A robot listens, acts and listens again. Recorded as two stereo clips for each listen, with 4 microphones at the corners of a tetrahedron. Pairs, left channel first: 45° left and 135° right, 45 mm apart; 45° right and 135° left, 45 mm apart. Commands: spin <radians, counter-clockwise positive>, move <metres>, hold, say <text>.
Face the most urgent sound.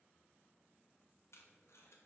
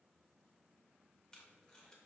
hold
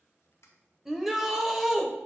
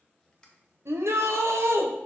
spin 2.53
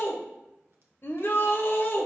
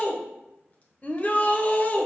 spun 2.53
spin 0.17
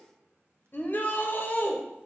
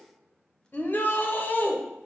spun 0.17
say Facing the shout, under 1 m away.